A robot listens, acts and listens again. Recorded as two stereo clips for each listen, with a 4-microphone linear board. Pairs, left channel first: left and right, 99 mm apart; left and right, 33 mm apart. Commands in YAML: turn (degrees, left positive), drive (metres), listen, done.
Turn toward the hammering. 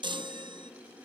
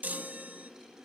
listen: true
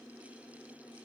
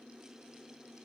listen: true
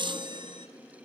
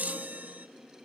done: "I can't make out hammering, only a chime."